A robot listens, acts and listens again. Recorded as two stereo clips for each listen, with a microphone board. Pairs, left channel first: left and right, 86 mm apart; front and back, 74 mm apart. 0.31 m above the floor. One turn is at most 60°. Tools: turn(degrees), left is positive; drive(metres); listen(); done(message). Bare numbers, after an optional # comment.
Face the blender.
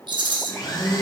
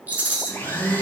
# The blender: 60° left.
turn(60)
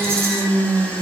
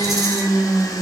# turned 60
# The blender is now 20° left.
turn(20)
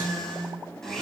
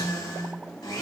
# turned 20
done("Found it: a blender, straight ahead.")